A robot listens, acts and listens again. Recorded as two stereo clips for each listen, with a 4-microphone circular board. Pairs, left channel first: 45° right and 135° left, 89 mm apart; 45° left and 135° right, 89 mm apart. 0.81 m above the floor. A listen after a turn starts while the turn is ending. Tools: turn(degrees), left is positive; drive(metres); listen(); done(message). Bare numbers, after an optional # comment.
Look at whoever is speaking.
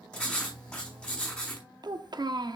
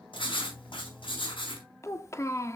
# The child speaking: 100° left.
turn(100)
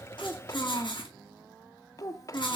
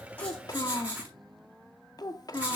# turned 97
done("Found it: a child speaking, straight ahead.")